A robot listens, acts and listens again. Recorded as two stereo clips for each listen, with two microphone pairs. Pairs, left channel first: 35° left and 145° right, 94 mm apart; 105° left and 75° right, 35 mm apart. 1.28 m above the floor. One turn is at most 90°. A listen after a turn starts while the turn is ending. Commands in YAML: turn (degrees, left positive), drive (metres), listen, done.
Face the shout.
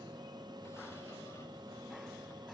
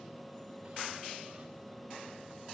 listen: true
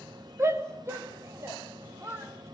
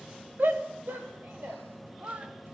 turn: -85
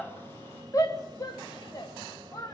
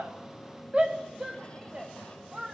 turn: -15
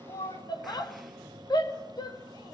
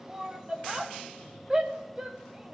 turn: -10
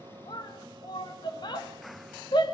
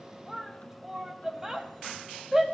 done: "Facing the shout."